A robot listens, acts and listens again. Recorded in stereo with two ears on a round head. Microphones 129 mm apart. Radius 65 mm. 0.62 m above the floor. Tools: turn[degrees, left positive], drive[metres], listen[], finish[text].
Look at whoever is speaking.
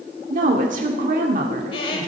Thought: The woman speaking: about 60° right or 120° right.
Action: turn[-60]
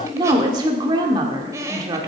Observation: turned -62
Thought: So it is at 35° right.
Action: turn[-35]
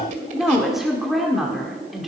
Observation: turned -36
Action: finish[Found it: a woman speaking, straight ahead, 1 to 2 m away.]